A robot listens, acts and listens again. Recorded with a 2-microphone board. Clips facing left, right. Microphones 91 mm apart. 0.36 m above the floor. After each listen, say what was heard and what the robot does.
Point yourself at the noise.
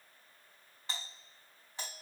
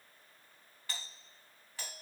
The doorbell: about 20° left or 160° left. Turn 20° left.
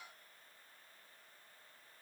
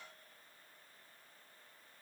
Keep listening.
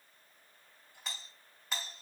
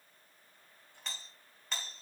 Found it: a doorbell, straight ahead, over 4 m away.